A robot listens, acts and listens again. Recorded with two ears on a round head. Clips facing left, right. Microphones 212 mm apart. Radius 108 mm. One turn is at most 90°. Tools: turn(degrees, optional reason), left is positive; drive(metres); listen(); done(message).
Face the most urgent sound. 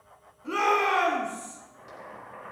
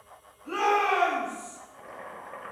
turn(degrees=40, reason="The shout: about 40° left or 140° left.")
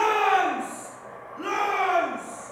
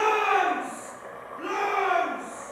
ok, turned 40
turn(degrees=90, reason="So it is at 95° left.")
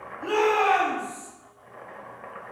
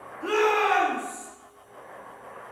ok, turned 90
turn(degrees=-25, reason="The shout is now 25° right.")
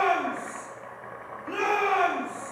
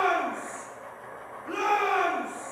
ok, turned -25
done("Found it: a shout, straight ahead, 1 to 2 m away.")